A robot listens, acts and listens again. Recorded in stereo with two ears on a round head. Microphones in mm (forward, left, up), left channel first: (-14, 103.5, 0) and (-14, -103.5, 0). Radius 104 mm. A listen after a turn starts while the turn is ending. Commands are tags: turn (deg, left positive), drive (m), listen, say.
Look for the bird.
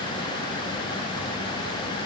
<listen/>
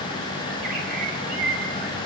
<turn deg="-45"/>
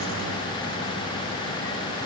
<listen/>
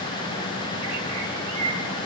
<turn deg="-90"/>
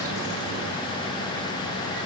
<listen/>
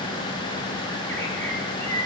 <turn deg="10"/>
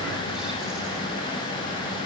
<listen/>
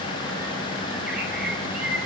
<say>Facing the bird.</say>